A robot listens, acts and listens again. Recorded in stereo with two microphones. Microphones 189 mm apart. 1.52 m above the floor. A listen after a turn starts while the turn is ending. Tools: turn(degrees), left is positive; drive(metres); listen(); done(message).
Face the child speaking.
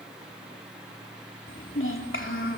turn(degrees=90)
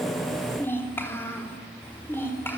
turn(degrees=10)
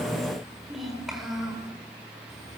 done("Found it: a child speaking, straight ahead, over 4 m away.")